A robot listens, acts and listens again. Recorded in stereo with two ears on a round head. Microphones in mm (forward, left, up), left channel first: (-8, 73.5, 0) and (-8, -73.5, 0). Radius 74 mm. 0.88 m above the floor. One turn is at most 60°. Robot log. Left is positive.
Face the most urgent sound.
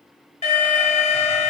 note: The alarm: about 40° left or 140° left.
cmd yaw +40
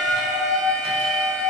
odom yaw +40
end: Facing the alarm.